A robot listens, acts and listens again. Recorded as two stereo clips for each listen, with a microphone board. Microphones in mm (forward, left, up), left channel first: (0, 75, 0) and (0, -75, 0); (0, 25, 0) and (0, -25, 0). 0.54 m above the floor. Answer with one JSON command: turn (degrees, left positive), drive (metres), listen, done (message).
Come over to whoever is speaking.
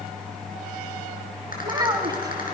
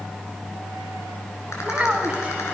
{"turn": -25}
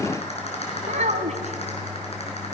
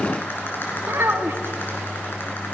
{"turn": -130}
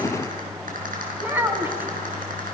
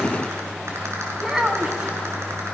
{"turn": -15}
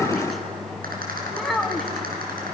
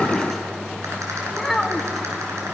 {"drive": 1.0}
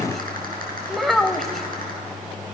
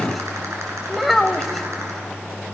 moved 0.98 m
{"drive": 1.0}
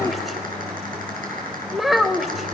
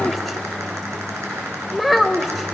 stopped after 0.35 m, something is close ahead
{"done": "I am next to the child speaking."}